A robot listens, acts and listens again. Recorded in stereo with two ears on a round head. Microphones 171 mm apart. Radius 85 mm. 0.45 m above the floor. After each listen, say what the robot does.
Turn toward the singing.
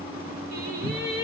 Turn 55° right.
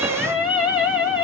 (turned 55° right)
Facing the singing, 2 to 4 m away.